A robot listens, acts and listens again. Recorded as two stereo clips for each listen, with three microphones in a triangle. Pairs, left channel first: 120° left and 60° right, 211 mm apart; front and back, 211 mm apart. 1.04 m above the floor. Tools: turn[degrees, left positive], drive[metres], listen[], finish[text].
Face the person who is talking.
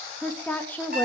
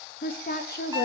Thought: The woman speaking: 40° left.
Action: turn[40]
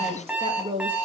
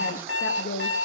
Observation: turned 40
Action: finish[Found it: a woman speaking, straight ahead, 1 to 2 m away.]